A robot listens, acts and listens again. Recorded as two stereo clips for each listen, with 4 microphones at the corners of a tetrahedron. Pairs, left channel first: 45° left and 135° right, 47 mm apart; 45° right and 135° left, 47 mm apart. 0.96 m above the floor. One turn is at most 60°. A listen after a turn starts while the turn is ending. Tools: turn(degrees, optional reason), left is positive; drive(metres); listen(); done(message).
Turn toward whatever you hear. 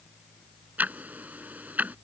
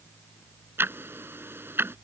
turn(degrees=60, reason="The ticking: 175° left.")
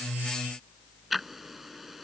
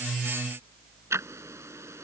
turn(degrees=60, reason="The ticking is now 140° left.")
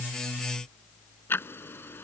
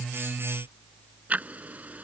turn(degrees=60, reason="The ticking is now 80° left.")
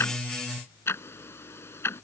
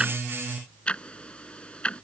turn(degrees=25, reason="The ticking is now 25° left.")
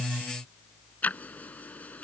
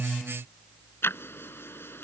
turn(degrees=-10, reason="The ticking is now 10° right.")
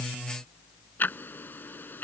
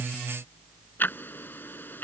done("Facing the ticking.")